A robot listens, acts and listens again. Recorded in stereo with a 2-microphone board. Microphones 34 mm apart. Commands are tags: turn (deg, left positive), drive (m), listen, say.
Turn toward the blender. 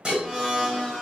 <turn deg="20"/>
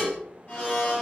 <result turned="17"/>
<turn deg="145"/>
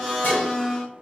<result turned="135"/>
<turn deg="10"/>
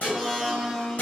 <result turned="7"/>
<say>Facing the blender, 2 to 4 m away.</say>